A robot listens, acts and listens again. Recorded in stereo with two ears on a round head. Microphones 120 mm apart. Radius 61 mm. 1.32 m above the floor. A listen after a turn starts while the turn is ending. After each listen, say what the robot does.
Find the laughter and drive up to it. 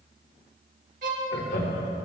Turn 75° left.
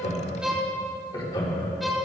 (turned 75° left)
Turn 30° left.
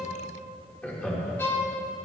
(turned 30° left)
Turn 10° left.
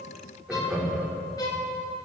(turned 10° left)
Drive 1.0 m forward.
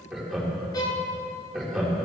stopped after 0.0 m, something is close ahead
Blocked. The laughter is further on, straight ahead.